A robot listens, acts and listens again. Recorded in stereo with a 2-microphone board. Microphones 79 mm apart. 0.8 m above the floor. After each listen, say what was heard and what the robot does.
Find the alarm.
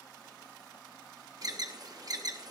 The alarm: about 50° right or 130° right. Turn 50° right.
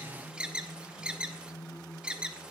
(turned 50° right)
So it is at 15° right. Turn 15° right.
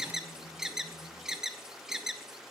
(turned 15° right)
The alarm is now 10° right. Turn 10° right.
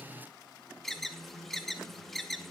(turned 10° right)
Found it: an alarm, straight ahead, under 1 m away.